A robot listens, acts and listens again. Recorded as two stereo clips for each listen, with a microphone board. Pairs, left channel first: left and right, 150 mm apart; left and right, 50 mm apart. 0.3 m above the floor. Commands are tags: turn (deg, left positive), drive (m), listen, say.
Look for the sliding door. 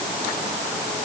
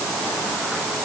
<listen/>
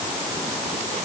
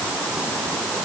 <listen/>
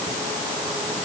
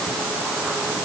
<say>I can't make out a sliding door.</say>